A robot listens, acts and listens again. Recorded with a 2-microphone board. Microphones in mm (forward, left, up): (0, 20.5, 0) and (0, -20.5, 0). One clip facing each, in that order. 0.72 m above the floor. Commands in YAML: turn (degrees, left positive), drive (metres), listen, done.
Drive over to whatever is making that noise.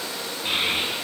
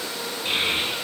turn: 30
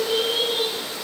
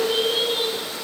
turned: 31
drive: 1.0
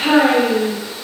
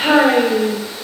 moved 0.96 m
drive: 1.0
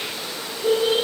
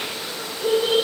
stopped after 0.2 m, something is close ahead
turn: 15
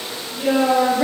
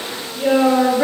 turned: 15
done: "Arrived at the child speaking, straight ahead."